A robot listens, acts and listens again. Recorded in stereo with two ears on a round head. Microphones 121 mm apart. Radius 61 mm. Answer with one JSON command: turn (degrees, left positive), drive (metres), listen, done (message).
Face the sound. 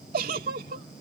{"turn": -70}
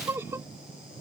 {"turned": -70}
{"turn": -20}
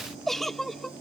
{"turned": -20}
{"done": "Found it: a giggle, straight ahead."}